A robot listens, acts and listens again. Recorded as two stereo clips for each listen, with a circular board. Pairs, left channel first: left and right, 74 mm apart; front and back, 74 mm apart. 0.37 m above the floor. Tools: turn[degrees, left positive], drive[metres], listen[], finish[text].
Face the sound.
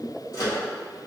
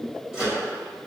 Thought: The microwave: 105° left.
Action: turn[105]
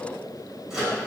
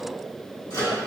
Thought: The microwave is now 10° right.
Action: turn[-10]
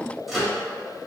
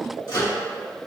Action: finish[Facing the microwave.]